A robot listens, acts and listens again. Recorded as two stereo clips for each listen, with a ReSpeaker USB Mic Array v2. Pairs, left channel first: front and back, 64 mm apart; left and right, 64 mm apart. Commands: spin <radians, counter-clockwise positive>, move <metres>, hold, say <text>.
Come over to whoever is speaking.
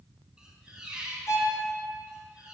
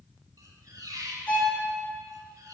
hold
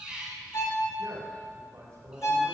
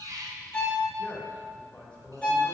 spin 2.79
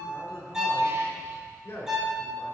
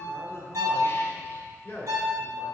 spin 0.61
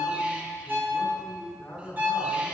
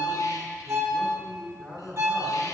spin 0.17
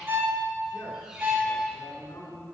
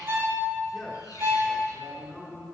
move 1.0
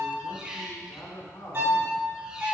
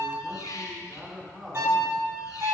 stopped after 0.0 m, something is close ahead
say Something is in my way. I am facing the man speaking but have not reached it.